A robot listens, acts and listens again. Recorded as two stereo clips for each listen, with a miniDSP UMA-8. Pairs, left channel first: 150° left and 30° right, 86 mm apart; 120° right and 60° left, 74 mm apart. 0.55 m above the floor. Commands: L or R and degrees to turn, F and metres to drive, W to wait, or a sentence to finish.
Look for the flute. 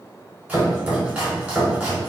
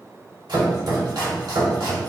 W
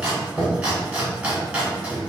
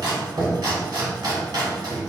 W
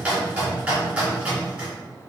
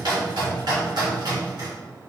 I can't make out a flute to turn to.